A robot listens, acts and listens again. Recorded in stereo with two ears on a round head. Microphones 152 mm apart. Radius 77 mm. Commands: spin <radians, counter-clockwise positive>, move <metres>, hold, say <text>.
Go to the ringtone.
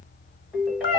spin 0.52
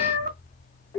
spin 2.71
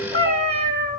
hold
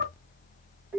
spin -0.26
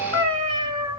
move 1.0
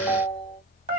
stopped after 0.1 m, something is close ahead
say Blocked. The ringtone is further on, straight ahead.